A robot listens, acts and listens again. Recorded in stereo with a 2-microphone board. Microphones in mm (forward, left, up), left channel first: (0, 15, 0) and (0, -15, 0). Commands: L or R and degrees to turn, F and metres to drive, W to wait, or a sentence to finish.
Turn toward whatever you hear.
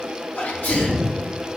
L90
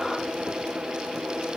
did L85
I heard a sneeze from this way, but can't make it out now.